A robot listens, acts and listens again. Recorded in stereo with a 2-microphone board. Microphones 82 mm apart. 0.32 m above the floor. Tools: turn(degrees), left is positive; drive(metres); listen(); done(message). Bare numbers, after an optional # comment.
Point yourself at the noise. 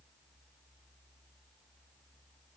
listen()
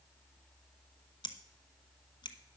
# The scissors: about 75° left or 105° left.
turn(75)
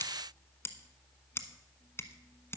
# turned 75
# So it is at 30° left.
turn(30)
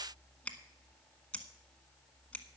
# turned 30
# The scissors is now 15° left.
turn(15)
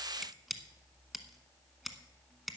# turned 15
done("Facing the scissors, 1 to 2 m away.")